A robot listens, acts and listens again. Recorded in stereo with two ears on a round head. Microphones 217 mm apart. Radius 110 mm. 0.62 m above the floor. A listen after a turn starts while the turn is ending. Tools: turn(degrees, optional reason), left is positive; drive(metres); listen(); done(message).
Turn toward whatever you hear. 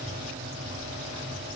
listen()
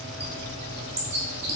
turn(degrees=-30, reason="The bird: about 30° right or 150° right.")
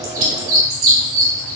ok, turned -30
turn(degrees=-120, reason="So it is at 120° right.")
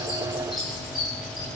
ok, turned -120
done("Facing the bird, 2 to 4 m away.")